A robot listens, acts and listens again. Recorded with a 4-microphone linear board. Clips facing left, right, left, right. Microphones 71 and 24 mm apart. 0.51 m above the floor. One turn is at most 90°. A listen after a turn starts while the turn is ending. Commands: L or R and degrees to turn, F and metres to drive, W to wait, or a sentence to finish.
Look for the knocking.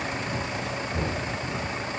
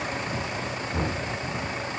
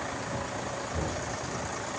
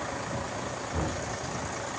R50
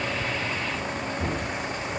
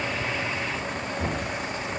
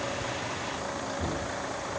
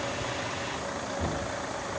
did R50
Facing the knocking.